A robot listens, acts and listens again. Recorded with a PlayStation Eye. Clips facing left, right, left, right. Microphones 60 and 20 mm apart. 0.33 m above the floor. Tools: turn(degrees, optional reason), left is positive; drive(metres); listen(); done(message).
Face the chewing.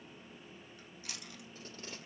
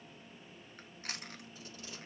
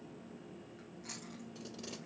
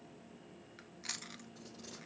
turn(degrees=-50, reason="The chewing: about 50° right or 130° right.")
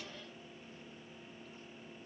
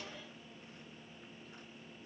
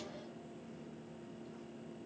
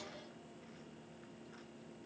listen()
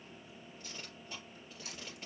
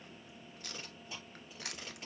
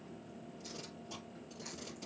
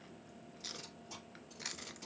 turn(degrees=-80, reason="So it is at 80° right.")
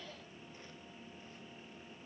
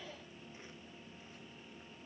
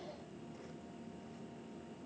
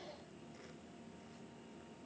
listen()
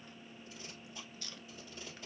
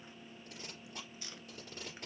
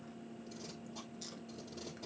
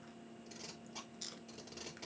turn(degrees=-20, reason="The chewing is now 20° right.")
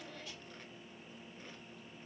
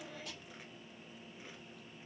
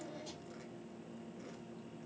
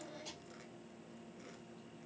listen()
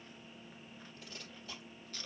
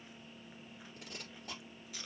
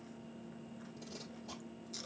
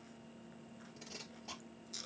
done("Facing the chewing.")